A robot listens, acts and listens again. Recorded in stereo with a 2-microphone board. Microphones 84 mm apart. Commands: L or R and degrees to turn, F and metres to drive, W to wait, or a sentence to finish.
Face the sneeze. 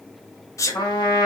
L40
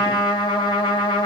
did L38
W
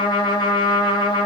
I heard a sneeze, but can't make it out now. It was about straight ahead or 105° left.